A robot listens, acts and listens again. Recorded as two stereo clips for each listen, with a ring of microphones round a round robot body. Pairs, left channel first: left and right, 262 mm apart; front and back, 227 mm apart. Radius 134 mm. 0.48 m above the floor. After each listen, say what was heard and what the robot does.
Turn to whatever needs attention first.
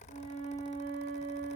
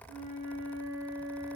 Keep listening.
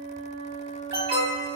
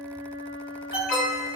The alarm: 45° right. Turn 45° right.
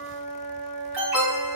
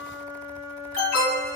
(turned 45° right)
Found it: an alarm, straight ahead, 2 to 4 m away.